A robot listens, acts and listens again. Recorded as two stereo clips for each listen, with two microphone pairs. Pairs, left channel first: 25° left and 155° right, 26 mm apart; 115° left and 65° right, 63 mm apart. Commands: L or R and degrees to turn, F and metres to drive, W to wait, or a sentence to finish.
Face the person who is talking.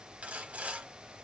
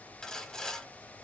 W
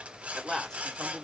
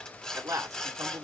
R40
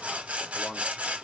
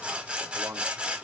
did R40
R10
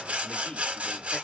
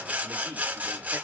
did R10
Facing the man speaking, 1 to 2 m away.